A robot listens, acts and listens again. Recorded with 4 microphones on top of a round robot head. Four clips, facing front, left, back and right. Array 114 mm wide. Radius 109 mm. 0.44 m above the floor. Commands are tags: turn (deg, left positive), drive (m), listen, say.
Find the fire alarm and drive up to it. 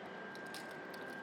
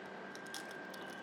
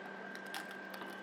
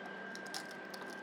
<listen/>
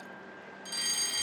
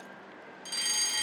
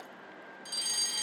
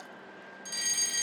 <turn deg="85"/>
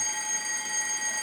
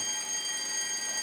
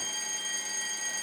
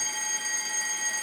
<turn deg="-30"/>
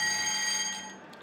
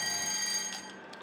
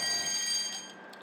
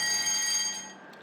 <turn deg="-10"/>
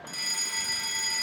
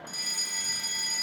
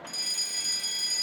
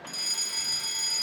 <drive m="1.0"/>
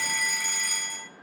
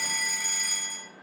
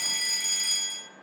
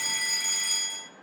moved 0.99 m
<drive m="1.0"/>
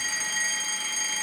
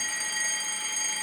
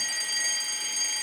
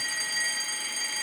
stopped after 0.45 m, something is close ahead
<say>I am next to the fire alarm.</say>